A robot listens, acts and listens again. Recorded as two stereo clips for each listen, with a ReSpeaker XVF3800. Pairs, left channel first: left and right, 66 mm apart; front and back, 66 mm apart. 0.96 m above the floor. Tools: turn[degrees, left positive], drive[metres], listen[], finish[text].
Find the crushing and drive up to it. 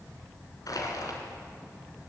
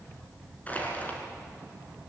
Thought: The crushing: 70° left.
Action: turn[70]
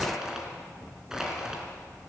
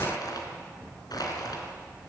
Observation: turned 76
Action: drive[1.0]
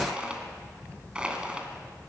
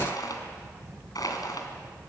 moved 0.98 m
Thought: The crushing is now 15° right.
Action: turn[-15]
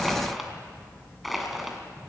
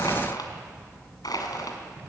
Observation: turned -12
Action: drive[1.0]
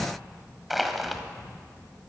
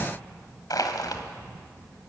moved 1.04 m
Action: drive[1.0]
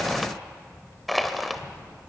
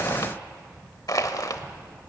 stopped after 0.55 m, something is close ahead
Action: finish[I am next to the crushing.]